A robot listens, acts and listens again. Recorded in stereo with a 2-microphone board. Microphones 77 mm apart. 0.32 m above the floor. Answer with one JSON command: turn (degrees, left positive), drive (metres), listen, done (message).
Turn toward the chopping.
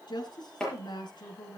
{"turn": 30}
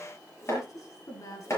{"turn": 140}
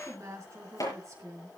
{"turn": 50}
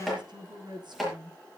{"done": "Facing the chopping, over 4 m away."}